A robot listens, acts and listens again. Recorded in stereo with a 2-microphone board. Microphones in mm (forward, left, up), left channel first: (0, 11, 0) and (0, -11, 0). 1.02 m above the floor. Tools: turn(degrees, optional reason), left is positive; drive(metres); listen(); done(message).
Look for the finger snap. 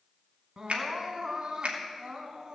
turn(degrees=-75, reason="The finger snap: about 75° right or 105° right.")
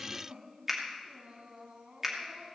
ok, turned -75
turn(degrees=-10, reason="So it is at 10° right.")
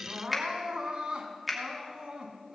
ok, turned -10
done("Found it: a finger snap, straight ahead, 2 to 4 m away.")